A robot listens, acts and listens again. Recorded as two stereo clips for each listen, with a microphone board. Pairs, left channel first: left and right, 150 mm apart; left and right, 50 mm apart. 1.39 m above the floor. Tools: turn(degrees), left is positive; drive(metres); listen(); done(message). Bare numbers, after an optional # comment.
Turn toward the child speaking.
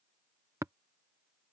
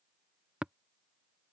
listen()
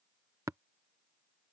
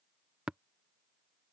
listen()
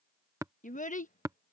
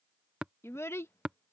# The child speaking: about 60° left or 120° left.
turn(60)
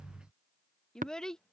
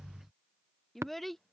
done("Found it: a child speaking, straight ahead.")